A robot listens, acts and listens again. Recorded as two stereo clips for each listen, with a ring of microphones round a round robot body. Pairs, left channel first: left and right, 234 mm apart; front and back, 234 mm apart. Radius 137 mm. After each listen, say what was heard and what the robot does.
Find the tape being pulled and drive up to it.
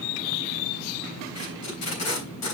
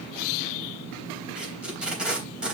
The tape being pulled: 95° left. Turn 95° left.
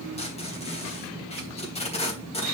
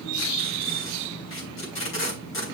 The tape being pulled is now 25° left. Turn 25° left.
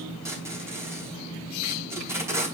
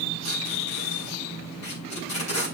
The tape being pulled is now 10° right. Turn 10° right.
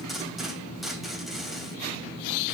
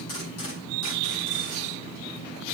Drive 1.0 m forward.
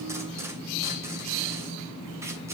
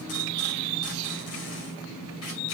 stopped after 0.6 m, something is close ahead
Keep listening.
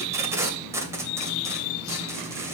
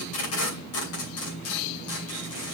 The tape being pulled is now 10° right. Turn 10° right.
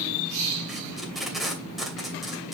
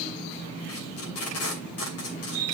Blocked. The tape being pulled is further on, straight ahead.